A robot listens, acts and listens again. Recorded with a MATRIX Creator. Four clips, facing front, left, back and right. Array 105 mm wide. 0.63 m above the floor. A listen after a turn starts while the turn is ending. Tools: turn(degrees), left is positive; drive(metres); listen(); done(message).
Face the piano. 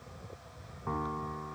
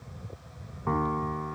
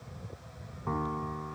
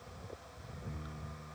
turn(degrees=90)
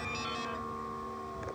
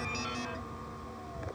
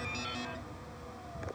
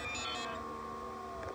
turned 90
listen()
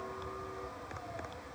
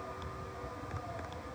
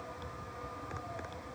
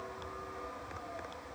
turn(degrees=-15)
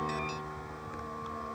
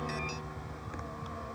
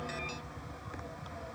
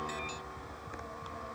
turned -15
listen()
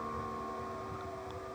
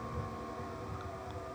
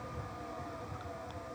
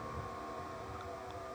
listen()
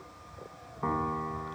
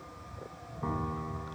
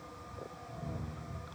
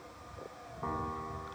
done("Found it: a piano, straight ahead.")